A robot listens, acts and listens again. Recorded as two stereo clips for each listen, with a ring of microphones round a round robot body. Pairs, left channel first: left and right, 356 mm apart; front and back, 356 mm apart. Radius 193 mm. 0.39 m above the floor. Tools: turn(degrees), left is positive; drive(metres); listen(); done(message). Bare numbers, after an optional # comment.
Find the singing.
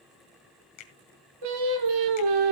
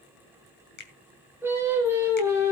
# The singing: 95° right.
turn(-95)
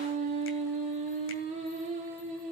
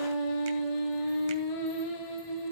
# The singing is now 20° right.
turn(-20)
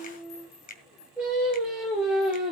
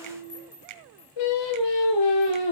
done("Found it: singing, straight ahead.")